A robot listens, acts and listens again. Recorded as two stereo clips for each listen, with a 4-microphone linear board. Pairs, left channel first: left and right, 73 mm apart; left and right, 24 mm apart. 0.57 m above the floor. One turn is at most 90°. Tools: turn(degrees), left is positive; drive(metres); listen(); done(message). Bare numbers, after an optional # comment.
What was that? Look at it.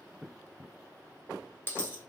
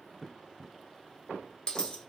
# The dropped coin: about 30° left or 150° left.
turn(30)
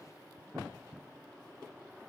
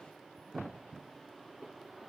listen()
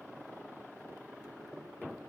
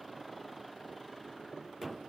done("I heard a dropped coin, but can't make it out now. It was about straight ahead or 120° left.")